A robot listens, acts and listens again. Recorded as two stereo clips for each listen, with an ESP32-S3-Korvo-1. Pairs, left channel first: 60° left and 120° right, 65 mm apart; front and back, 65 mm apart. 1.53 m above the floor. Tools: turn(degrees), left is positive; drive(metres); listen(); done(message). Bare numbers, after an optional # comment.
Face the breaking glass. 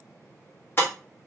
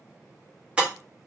# The breaking glass: 110° left.
turn(110)
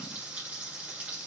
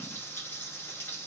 done("I heard breaking glass from this way, but can't make it out now.")